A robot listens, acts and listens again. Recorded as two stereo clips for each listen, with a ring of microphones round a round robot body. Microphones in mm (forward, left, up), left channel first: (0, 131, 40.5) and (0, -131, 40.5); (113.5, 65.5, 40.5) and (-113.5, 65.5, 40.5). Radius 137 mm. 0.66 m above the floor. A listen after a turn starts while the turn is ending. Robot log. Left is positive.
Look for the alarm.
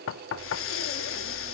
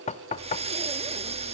cmd idle
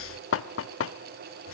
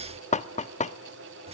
cmd idle
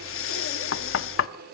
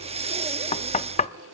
end: I can't make out an alarm, only knocking and breathing.